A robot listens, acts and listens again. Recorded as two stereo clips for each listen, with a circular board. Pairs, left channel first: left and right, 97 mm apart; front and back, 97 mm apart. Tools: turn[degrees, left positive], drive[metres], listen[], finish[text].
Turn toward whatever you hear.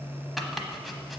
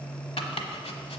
Action: finish[Facing the chopping, 1 to 2 m away.]